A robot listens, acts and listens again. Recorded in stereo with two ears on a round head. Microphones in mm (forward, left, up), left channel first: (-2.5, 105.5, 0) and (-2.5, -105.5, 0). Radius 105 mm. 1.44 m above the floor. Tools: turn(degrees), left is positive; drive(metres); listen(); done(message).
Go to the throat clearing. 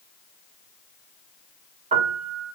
listen()
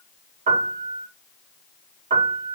listen()
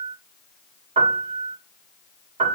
done("I can't make out throat clearing to turn to.")